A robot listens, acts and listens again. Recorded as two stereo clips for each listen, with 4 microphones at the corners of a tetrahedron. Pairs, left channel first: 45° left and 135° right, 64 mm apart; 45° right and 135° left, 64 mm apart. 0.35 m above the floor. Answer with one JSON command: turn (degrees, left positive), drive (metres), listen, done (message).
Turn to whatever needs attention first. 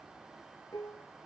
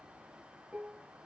{"listen": true}
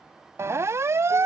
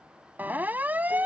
{"turn": -165}
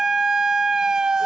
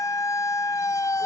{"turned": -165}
{"turn": -55}
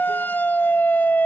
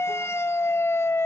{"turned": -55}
{"turn": -10}
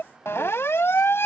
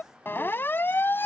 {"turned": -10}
{"done": "Facing the siren."}